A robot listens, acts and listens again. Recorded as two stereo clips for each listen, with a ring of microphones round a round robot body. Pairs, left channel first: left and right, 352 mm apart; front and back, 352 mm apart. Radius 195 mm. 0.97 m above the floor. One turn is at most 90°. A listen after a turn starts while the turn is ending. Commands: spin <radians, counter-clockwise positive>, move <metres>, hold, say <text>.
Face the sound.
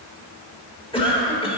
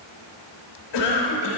spin 0.26
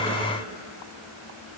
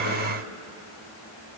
hold
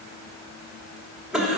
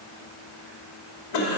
say Found it: a cough, straight ahead.